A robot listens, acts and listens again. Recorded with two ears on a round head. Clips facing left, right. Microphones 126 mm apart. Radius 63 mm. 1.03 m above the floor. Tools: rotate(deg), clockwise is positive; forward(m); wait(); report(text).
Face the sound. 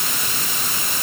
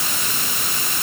wait()
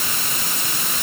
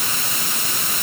wait()
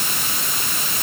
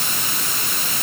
report("I can't make out anything to turn to.")